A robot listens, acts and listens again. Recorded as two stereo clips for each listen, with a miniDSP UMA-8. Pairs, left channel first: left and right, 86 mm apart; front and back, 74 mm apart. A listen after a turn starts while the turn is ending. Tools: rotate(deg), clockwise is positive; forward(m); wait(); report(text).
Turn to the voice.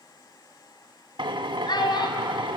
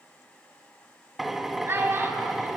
rotate(-120)
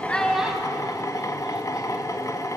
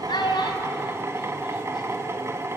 wait()
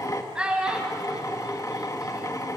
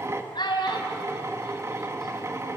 rotate(10)
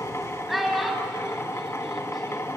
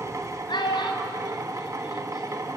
report("Found it: a child speaking, straight ahead, 2 to 4 m away.")